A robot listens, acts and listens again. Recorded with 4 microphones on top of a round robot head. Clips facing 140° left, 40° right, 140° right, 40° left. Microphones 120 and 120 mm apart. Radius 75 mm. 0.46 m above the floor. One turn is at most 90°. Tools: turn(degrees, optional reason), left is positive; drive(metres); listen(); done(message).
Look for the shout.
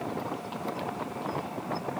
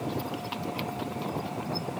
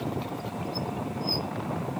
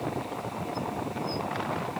listen()
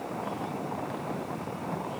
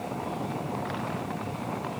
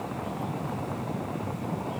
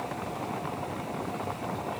listen()
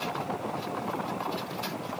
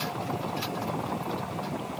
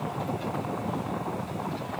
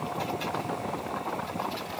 done("I can't make out a shout.")